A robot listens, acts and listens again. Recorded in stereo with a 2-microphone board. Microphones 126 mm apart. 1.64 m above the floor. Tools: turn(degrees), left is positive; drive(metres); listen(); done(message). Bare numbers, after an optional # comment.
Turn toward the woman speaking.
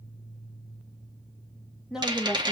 turn(-30)
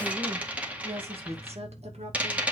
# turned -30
# So it is at 120° right.
turn(-120)
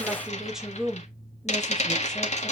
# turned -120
done("Found it: a woman speaking, straight ahead, 2 to 4 m away.")